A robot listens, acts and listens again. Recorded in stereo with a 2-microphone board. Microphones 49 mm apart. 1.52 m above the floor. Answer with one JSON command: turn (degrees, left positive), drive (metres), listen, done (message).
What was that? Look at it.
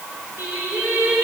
{"turn": -60}
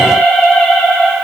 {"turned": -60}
{"turn": 20}
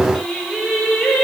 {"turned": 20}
{"turn": 15}
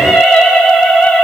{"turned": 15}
{"turn": 20}
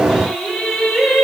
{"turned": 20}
{"done": "Facing the singing."}